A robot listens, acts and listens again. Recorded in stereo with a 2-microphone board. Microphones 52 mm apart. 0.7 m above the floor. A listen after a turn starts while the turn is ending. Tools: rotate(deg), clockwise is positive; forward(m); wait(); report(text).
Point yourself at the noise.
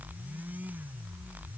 wait()
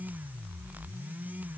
wait()
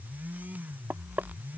rotate(40)
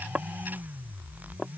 report("Found it: knocking, straight ahead.")